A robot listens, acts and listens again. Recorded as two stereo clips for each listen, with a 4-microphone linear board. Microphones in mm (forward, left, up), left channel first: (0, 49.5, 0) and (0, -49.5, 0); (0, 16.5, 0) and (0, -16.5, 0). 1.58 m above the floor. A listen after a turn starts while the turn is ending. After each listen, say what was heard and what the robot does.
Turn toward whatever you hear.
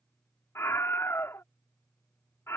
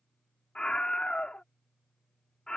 The scream: about 25° left or 155° left. Turn 25° left.
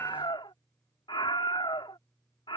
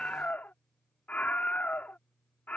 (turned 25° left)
So it is at 125° left. Turn 125° left.
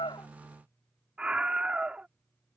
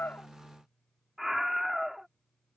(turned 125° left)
The scream is now 10° right. Turn 10° right.
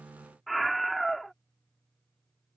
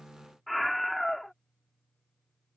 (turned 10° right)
Found it: a scream, straight ahead.